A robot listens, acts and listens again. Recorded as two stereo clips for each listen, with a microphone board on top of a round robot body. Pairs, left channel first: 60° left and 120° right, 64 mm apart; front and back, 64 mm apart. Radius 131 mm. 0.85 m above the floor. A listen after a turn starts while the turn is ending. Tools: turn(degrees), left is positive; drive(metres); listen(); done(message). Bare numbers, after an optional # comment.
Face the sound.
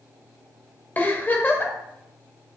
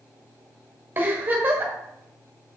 # The giggle: 120° left.
turn(120)
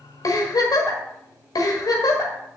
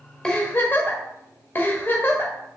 # The giggle is now 55° left.
turn(55)
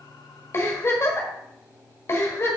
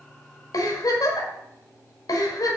# The giggle is now 10° left.
turn(10)
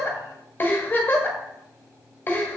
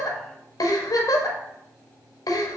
done("Found it: a giggle, straight ahead, 1 to 2 m away.")